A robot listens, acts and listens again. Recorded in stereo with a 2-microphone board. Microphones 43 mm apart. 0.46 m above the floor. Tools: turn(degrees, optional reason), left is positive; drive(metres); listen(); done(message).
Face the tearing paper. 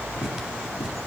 turn(degrees=-20, reason="The tearing paper: about 20° right or 160° right.")
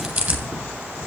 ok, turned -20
turn(degrees=-140, reason="So it is at 140° right.")
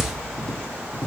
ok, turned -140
turn(degrees=10, reason="The tearing paper is now 10° left.")
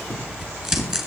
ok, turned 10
done("Facing the tearing paper, 2 to 4 m away.")